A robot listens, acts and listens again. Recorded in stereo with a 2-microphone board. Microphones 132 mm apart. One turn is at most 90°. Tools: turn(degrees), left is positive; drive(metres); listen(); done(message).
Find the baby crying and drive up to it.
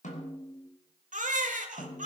turn(degrees=-90)
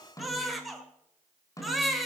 drive(metres=1.0)
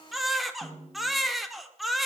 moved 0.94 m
drive(metres=1.0)
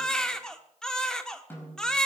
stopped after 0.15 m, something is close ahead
done("Arrived at the baby crying, straight ahead.")